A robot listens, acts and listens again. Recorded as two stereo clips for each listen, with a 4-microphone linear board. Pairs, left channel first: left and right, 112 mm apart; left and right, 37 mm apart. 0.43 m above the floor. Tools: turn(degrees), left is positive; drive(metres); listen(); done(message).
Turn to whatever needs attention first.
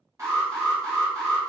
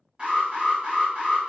turn(degrees=-30)
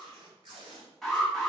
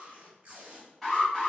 done("Facing the alarm.")